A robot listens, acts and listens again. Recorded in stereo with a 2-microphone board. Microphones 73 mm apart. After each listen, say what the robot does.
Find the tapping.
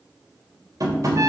Turn 60° right.
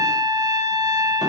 Keep listening.
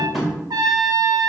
Found it: tapping, straight ahead, 2 to 4 m away.